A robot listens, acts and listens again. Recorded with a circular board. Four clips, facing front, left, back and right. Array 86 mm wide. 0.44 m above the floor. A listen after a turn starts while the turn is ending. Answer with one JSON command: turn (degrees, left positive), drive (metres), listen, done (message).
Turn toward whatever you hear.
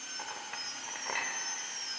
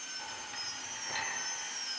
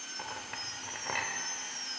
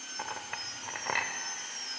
{"turn": -100}
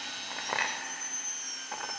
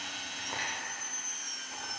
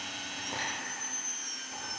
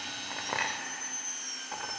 {"turn": -30}
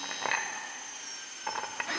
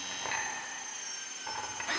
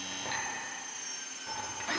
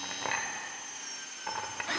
{"turn": -10}
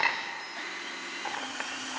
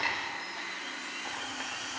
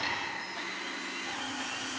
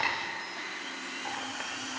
{"done": "Facing the clink."}